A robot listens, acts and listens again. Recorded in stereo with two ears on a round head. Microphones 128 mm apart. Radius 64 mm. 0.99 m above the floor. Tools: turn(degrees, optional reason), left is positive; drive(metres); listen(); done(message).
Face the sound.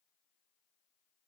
listen()
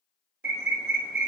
turn(degrees=-90)
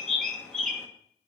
done("Found it: a bird, straight ahead, 1 to 2 m away.")